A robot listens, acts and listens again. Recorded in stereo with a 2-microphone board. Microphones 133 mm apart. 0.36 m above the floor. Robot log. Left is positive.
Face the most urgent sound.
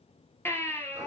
note: The baby crying: about 15° left or 165° left.
cmd yaw +15
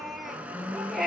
end: Facing the baby crying, 2 to 4 m away.